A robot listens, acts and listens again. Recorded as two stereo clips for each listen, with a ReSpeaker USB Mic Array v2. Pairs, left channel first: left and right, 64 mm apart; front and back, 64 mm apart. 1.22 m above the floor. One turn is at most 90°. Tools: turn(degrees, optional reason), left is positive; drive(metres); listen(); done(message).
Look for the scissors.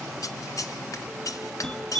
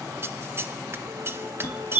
turn(degrees=90, reason="The scissors: 125° left.")
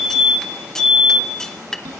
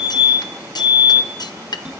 done("Facing the scissors, under 1 m away.")